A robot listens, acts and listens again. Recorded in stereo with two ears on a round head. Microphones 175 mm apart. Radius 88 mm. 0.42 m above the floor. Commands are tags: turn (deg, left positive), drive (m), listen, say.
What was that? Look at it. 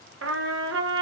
<turn deg="-65"/>
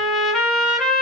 <say>Found it: a trumpet, straight ahead.</say>